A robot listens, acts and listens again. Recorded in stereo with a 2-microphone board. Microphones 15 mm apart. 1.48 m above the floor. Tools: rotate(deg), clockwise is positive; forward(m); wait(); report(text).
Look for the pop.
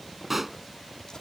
rotate(30)
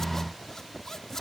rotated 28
wait()
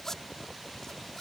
report("I heard a pop, but can't make it out now. It was about 15° left or 140° right.")